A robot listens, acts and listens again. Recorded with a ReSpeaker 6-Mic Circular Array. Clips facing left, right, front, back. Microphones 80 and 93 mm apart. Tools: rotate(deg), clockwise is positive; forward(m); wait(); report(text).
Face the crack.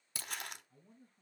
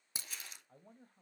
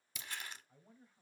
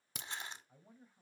rotate(160)
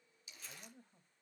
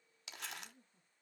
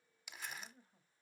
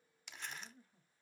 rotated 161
report("Facing where the crack came from. I can't hear it now.")